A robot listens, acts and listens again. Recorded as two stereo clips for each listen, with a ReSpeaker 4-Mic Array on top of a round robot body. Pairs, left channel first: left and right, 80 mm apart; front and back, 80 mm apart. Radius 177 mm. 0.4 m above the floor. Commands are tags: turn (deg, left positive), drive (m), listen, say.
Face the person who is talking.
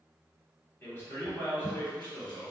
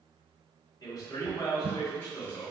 <turn deg="30"/>
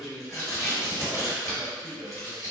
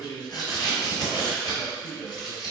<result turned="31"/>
<say>Facing the man speaking.</say>